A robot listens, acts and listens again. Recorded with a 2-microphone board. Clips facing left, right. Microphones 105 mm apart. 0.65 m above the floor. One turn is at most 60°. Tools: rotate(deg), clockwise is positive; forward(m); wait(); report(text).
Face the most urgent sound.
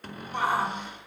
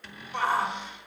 rotate(-15)
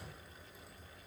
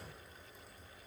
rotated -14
wait()
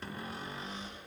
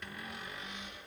wait()
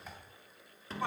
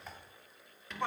report("Found it: a shout, straight ahead, 2 to 4 m away.")